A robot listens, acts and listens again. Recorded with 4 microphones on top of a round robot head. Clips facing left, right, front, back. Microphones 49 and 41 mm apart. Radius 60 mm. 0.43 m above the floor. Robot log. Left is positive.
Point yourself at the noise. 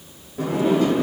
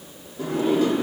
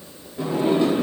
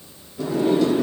note: The sliding door: 60° left.
cmd yaw +60
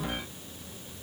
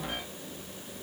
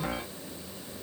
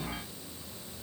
cmd idle
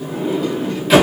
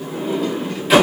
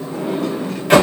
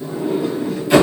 end: Found it: a sliding door, straight ahead, 1 to 2 m away.